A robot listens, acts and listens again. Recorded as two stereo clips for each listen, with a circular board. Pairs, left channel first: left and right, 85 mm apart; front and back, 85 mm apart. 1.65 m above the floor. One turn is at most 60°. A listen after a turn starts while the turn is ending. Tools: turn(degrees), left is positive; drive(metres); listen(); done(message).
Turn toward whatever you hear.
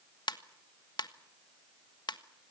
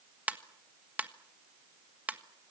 turn(degrees=60)
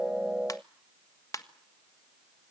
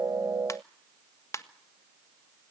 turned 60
turn(degrees=50)
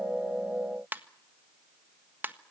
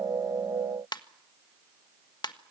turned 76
turn(degrees=-25)
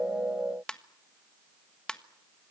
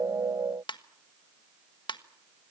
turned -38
turn(degrees=10)
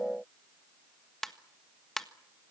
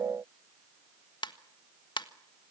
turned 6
done("Found it: a ringtone, straight ahead, 1 to 2 m away.")